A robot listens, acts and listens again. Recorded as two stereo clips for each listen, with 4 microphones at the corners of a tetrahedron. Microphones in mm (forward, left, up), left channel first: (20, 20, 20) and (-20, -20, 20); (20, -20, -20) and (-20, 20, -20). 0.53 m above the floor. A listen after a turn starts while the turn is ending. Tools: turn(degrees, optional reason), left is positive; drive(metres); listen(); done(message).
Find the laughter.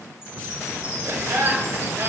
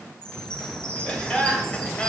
turn(degrees=-110, reason="The laughter: 110° right.")
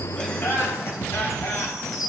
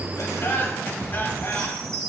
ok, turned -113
done("Facing the laughter, 2 to 4 m away.")